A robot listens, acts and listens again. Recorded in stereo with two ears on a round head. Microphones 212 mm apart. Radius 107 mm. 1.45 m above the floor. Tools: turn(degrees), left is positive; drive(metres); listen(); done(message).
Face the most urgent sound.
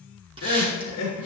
turn(degrees=90)
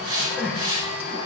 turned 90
done("Facing the crying, 2 to 4 m away.")